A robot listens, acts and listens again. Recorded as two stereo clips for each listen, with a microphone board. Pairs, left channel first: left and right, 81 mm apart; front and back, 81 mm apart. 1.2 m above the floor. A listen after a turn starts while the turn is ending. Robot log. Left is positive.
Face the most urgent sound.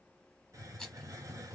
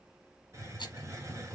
cmd idle
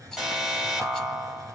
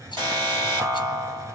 note: The alarm: 170° right.
cmd yaw -170
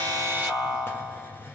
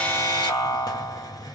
note: The alarm is now 10° right.
cmd yaw -10
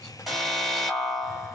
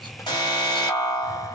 end: Facing the alarm, 2 to 4 m away.